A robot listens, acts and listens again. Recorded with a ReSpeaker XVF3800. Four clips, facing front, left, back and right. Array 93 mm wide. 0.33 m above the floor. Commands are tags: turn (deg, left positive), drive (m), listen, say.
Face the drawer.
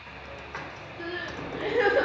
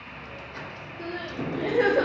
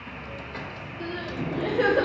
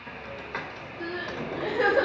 <turn deg="70"/>
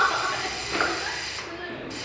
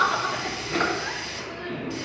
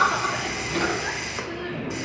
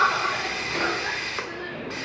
<turn deg="25"/>
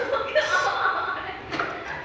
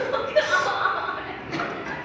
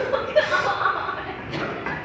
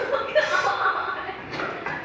<say>Facing the drawer, 2 to 4 m away.</say>